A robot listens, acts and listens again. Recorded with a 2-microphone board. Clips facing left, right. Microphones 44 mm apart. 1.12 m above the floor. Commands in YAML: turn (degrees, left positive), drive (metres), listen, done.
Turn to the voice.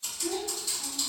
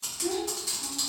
turn: -45
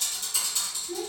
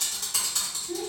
done: "Facing the child speaking, under 1 m away."